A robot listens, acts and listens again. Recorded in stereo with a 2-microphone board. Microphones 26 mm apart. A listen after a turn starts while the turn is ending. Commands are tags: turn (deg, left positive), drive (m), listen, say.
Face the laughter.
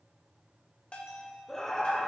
<turn deg="30"/>
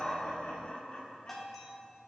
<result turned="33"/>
<turn deg="135"/>
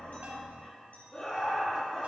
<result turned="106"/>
<turn deg="30"/>
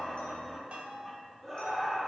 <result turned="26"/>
<say>Facing the laughter, 2 to 4 m away.</say>